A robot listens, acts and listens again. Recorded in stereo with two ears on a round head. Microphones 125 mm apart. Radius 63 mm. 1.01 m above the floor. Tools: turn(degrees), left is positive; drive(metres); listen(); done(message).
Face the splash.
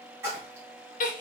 turn(degrees=-20)
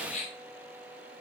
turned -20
listen()
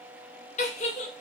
done("I heard a splash, but can't make it out now. It was about straight ahead or 140° right.")